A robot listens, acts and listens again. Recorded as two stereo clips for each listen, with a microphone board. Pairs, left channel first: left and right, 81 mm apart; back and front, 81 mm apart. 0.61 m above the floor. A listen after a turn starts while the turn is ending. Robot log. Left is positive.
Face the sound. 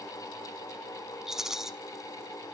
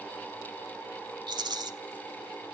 end: Found it: a rattle, straight ahead, under 1 m away.